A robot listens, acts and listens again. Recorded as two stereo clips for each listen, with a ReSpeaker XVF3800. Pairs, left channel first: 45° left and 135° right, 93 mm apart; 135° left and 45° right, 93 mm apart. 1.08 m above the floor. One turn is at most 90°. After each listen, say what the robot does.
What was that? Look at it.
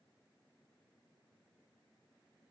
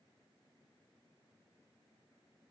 Keep listening.
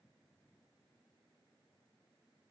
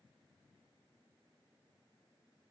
Keep listening.
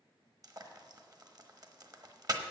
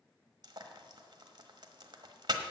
Turn 90° right.
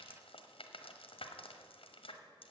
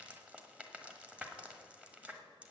Turn 35° left.
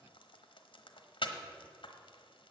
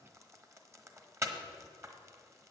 Turn 15° left.
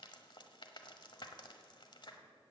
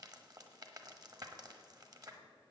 Found it: frying, straight ahead.